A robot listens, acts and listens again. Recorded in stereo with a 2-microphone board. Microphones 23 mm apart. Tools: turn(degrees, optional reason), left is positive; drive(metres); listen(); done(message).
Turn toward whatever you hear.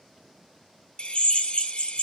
turn(degrees=55, reason="The drill: about 55° left or 125° left.")
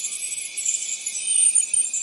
done("Found it: a drill, straight ahead, 1 to 2 m away.")